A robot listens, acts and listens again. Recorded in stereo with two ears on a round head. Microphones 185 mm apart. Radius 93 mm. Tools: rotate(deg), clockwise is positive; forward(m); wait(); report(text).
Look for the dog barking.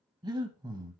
wait()
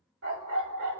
rotate(65)
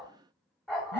report("Facing the dog barking.")